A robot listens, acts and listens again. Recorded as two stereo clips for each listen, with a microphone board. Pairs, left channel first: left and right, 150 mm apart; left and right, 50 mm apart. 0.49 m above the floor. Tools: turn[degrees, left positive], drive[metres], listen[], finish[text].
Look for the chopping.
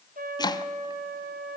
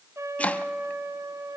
Thought: The chopping: about 25° left or 155° left.
Action: turn[25]
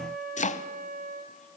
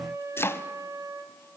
Thought: So it is at 125° left.
Action: turn[125]
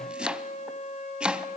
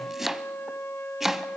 Action: finish[Found it: chopping, straight ahead.]